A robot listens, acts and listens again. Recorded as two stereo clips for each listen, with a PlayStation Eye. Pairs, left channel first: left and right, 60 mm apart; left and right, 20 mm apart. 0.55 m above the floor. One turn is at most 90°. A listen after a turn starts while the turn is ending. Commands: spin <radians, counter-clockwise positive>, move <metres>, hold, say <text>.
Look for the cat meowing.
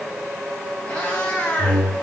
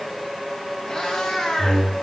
spin 0.35
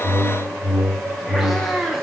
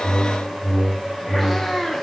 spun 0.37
say Found it: a cat meowing, straight ahead, over 4 m away.